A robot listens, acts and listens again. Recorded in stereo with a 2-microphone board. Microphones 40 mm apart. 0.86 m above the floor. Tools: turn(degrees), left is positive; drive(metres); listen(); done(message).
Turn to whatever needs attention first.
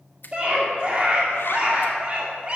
turn(degrees=-25)
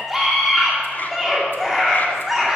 done("Facing the scream, 2 to 4 m away.")